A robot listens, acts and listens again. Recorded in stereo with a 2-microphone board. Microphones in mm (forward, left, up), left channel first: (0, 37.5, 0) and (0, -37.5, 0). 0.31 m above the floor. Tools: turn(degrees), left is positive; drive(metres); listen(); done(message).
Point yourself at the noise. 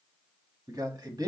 turn(degrees=-60)
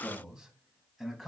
done("Facing the man speaking, 2 to 4 m away.")